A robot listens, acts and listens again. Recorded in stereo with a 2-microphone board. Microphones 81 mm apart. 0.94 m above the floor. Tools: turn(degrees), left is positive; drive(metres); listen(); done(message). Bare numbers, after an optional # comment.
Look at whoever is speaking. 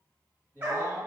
# The man speaking: about 35° left or 145° left.
turn(35)
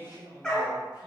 # So it is at 105° left.
turn(105)
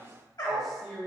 done("Found it: a man speaking, straight ahead, 1 to 2 m away.")